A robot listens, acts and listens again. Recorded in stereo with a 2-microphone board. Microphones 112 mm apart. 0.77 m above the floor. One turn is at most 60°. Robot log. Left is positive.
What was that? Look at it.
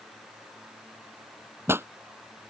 note: The pop: about 20° right or 160° right.
cmd yaw -20
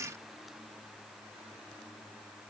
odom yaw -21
cmd idle
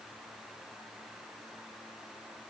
end: I heard a pop, but can't make it out now. It was about straight ahead or 140° right.